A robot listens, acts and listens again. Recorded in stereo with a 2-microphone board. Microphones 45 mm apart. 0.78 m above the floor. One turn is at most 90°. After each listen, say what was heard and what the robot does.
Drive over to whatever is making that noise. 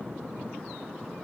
Keep listening.
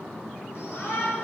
The shout: about 60° left or 120° left. Turn 60° left.
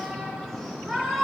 Drive 1.0 m forward.
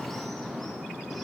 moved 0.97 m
Keep listening.
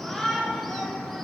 Drive 1.0 m forward.
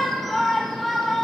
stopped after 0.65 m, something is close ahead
I am next to the shout.